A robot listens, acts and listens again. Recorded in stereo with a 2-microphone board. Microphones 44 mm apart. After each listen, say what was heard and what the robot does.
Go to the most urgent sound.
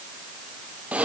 Keep listening.
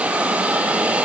Keep listening.
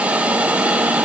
I can't make out anything urgent, only a hiss.